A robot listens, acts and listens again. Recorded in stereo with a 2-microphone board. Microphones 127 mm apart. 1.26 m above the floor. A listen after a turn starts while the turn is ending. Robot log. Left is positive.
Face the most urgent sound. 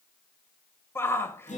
note: The shout: about 20° left or 160° left.
cmd yaw +20
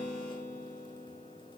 cmd idle
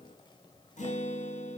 cmd idle
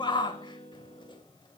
note: So it is at 140° left.
cmd yaw +140
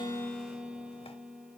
cmd idle
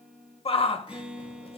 note: The shout is now 55° left.
cmd yaw +55
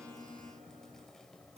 cmd idle
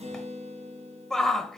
end: Facing the shout.